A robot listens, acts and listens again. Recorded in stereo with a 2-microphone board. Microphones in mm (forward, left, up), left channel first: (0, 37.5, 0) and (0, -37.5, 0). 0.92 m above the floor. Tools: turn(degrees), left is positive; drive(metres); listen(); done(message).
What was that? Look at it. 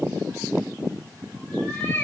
turn(degrees=25)
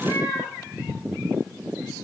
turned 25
turn(degrees=125)
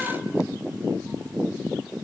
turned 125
listen()
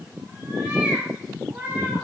turn(degrees=-20)
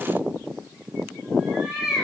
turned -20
done("Found it: a cat meowing, straight ahead.")